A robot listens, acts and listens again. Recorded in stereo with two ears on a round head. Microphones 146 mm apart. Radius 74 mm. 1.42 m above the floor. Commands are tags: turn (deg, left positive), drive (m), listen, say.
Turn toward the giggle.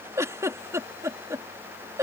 <turn deg="-20"/>
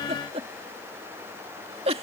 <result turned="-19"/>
<turn deg="-140"/>
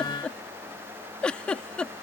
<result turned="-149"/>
<say>Facing the giggle.</say>